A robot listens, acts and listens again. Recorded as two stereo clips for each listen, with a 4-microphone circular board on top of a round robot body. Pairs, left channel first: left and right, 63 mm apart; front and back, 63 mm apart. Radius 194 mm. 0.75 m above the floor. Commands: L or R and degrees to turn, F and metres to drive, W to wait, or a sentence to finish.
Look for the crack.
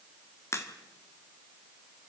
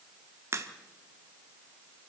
L135
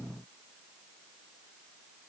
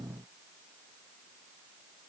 I heard a crack from this way, but can't make it out now.